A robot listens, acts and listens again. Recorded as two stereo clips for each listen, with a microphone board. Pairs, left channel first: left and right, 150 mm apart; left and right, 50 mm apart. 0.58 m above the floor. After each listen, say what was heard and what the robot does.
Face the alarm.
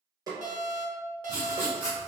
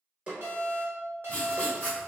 The alarm: about 55° right or 125° right. Turn 55° right.
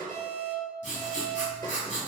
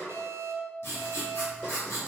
So it is at 65° right. Turn 65° right.
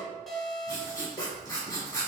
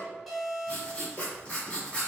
Facing the alarm, under 1 m away.